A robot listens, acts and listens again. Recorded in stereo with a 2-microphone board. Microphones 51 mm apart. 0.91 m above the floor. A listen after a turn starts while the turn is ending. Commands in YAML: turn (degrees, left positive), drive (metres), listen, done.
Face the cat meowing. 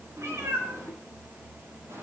turn: -90
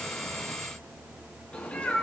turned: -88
turn: 20
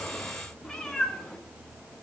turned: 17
done: "Facing the cat meowing."